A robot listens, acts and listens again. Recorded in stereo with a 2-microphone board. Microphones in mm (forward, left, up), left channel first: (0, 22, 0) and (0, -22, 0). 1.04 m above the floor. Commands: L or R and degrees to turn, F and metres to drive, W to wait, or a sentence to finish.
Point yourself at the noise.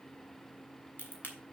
L40
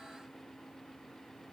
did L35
W
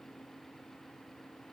I heard a crack, but can't make it out now. It was about 5° left or 105° left.